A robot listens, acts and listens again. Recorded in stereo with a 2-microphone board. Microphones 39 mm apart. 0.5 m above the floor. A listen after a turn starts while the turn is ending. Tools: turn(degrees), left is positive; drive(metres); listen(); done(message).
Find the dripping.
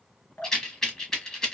turn(degrees=90)
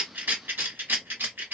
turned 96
listen()
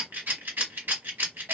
listen()
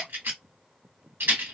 done("Facing where the dripping came from. I can't hear it now.")